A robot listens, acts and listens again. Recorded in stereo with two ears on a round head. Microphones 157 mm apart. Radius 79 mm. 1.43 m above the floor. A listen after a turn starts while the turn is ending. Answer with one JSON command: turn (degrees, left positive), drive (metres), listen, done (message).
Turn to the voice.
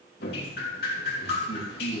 {"turn": 35}
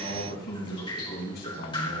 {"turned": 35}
{"turn": 115}
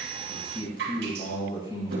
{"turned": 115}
{"turn": 30}
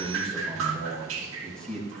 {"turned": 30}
{"done": "Facing the man speaking, over 4 m away."}